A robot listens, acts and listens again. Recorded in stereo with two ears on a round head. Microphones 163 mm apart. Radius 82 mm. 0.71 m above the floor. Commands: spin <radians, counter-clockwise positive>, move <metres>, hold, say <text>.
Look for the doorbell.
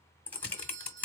spin -0.79
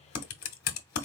hold
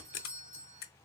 spin -1.40
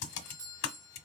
spin -0.44
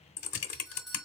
say Facing the doorbell.